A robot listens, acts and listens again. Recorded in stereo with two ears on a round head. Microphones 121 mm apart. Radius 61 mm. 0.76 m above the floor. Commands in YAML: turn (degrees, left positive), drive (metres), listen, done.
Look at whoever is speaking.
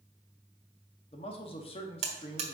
turn: 45
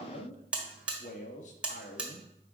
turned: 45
turn: 80
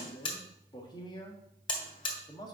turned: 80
turn: 35
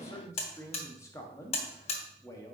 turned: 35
turn: 25
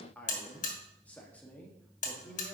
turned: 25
turn: 15
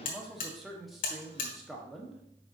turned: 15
done: "Found it: a man speaking, straight ahead, 1 to 2 m away."